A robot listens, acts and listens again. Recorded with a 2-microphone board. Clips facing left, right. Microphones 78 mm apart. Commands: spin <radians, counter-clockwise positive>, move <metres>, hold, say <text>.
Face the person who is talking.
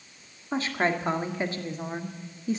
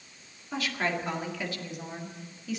spin 0.61
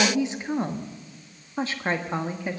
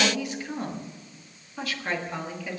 spin 0.61
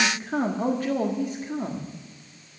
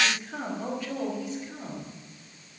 spin 2.27
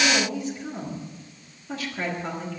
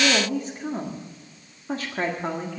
spin -0.70
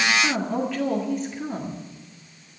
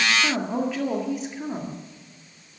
say Found it: a woman speaking, straight ahead.